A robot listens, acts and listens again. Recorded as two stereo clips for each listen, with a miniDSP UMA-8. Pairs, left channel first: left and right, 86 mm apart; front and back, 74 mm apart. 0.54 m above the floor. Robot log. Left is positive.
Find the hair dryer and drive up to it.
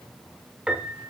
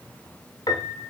cmd idle
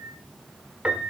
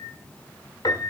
cmd idle
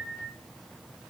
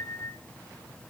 end: I can't make out a hair dryer, only a piano.